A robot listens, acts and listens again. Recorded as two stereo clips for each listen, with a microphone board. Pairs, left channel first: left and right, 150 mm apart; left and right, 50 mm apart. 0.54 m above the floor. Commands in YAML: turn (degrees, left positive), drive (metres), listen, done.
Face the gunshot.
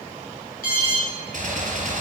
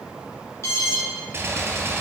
turn: -65
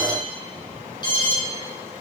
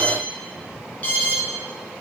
listen: true
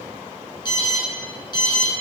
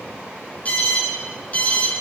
done: "I heard a gunshot, but can't make it out now. It was about straight ahead or 50° right."